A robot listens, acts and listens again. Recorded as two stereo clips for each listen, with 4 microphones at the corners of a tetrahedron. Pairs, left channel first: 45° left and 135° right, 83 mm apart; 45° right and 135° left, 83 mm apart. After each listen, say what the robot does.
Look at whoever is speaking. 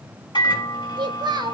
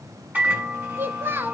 Turn 165° right.
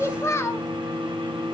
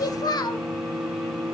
Turn 10° right.
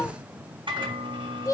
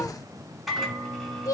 Facing the child speaking, 1 to 2 m away.